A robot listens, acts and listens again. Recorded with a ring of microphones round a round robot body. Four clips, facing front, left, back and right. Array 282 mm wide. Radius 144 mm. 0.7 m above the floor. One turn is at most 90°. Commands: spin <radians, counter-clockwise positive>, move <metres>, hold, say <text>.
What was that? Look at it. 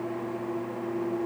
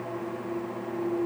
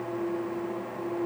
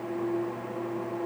hold
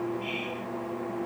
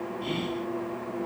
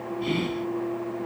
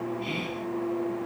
spin -1.57
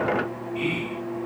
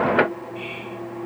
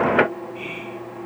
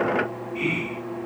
spin -1.13
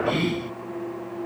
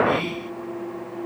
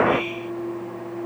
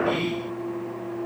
say Found it: whispering, straight ahead.